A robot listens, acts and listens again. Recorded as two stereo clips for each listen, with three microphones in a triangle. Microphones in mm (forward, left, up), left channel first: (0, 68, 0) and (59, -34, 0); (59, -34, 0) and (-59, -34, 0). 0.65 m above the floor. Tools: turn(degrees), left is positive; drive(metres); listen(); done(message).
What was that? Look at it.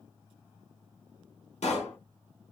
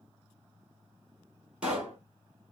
turn(degrees=100)
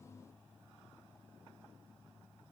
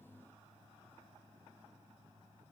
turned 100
done("Facing where the pop came from. I can't hear it now.")